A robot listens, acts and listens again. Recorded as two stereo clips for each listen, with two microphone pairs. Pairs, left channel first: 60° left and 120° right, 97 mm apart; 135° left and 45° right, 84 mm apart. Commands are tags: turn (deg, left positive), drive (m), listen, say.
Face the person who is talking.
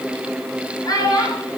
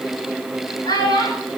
<turn deg="110"/>
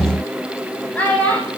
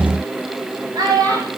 <turn deg="-15"/>
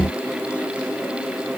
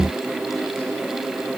<listen/>
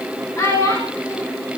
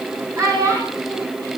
<say>Facing the child speaking.</say>